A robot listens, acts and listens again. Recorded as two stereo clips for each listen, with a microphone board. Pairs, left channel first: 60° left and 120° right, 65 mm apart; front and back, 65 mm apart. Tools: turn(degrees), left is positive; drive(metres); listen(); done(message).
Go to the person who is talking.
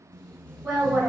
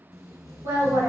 turn(degrees=180)
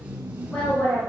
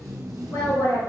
drive(metres=1.0)
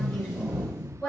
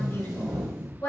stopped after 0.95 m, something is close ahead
done("Arrived at the woman speaking, straight ahead.")